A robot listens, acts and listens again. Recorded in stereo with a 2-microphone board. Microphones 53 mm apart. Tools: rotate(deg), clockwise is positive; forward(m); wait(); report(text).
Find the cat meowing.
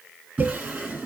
wait()
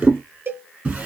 wait()
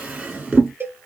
report("I can't make out a cat meowing to turn to.")